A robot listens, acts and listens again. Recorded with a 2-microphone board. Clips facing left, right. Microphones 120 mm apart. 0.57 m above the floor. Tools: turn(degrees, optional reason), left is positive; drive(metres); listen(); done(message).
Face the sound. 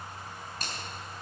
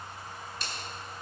turn(degrees=45, reason="The finger snap: about 45° left or 135° left.")
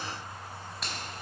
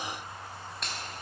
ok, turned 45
done("Facing the finger snap, 2 to 4 m away.")